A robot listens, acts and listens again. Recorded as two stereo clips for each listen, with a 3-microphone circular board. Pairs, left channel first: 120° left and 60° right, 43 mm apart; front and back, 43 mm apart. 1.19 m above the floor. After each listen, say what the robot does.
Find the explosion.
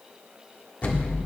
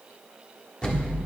Turn 65° left.
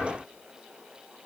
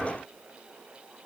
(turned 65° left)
Facing where the explosion came from. I can't hear it now.